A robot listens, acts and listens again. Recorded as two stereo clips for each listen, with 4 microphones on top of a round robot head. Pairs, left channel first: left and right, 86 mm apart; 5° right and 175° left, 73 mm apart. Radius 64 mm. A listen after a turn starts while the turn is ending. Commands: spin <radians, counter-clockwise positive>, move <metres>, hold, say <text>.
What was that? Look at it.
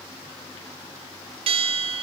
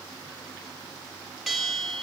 spin -1.75
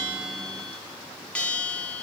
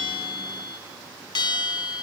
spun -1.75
spin 0.17
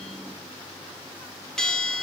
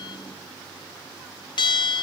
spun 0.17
say Found it: a bell, straight ahead.